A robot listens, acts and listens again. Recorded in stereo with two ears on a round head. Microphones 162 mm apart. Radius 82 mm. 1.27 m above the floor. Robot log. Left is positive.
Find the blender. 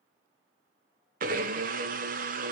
note: The blender: about 45° right or 135° right.
cmd yaw -45
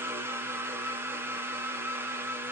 note: So it is at 15° right.
cmd yaw -15
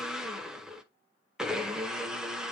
end: Found it: a blender, straight ahead, under 1 m away.